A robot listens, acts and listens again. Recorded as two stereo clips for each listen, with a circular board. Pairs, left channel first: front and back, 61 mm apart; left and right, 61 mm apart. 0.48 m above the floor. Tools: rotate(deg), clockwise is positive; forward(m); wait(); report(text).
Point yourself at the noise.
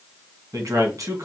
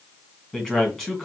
rotate(-170)
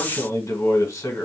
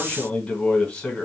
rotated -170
rotate(-15)
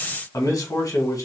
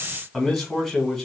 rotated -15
report("Found it: a man speaking, straight ahead.")